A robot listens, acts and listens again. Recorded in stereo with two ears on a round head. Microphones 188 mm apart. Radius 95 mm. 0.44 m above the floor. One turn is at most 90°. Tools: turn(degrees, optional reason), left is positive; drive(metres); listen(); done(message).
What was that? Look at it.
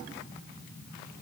listen()
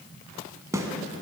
turn(degrees=-15, reason="The snare drum: about 15° right or 165° right.")
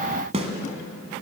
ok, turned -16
turn(degrees=-90, reason="So it is at 150° right.")
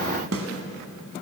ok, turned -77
turn(degrees=-70, reason="The snare drum is now 70° right.")
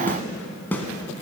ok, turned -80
turn(degrees=10, reason="The snare drum is now 10° left.")
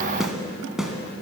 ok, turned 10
done("Found it: a snare drum, straight ahead, 1 to 2 m away.")